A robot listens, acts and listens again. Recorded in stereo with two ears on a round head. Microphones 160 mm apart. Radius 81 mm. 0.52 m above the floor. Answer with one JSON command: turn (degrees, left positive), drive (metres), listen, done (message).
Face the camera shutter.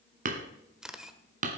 {"turn": -30}
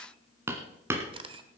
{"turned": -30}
{"turn": -145}
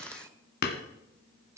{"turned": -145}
{"turn": -20}
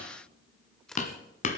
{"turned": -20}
{"done": "Facing the camera shutter."}